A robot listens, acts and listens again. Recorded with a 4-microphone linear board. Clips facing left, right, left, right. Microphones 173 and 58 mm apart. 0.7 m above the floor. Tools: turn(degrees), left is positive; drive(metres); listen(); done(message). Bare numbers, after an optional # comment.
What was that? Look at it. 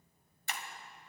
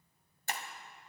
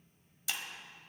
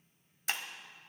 # The breaking glass: about 45° right or 135° right.
turn(-45)
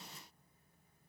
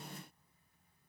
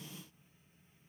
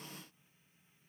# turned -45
listen()
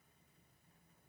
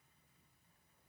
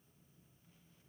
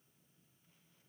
done("I heard breaking glass, but can't make it out now. It was about straight ahead or 90° right.")